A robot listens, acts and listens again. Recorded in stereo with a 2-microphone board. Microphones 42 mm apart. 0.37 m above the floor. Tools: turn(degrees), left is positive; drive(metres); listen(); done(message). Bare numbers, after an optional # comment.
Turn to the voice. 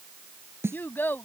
# The child speaking: about 55° left or 125° left.
turn(55)
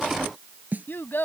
# So it is at 65° left.
turn(65)
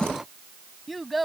done("Facing the child speaking.")